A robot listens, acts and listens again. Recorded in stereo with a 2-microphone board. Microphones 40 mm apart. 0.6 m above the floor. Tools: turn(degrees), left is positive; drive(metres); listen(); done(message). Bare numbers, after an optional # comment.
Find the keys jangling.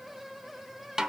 listen()
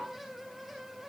listen()
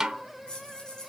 # The keys jangling: about 20° left or 160° left.
turn(20)
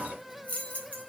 # The keys jangling: about 35° left or 145° left.
turn(35)
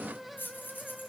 # So it is at 120° left.
turn(120)
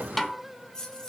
# The keys jangling is now 20° left.
turn(20)
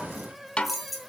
done("Facing the keys jangling, 2 to 4 m away.")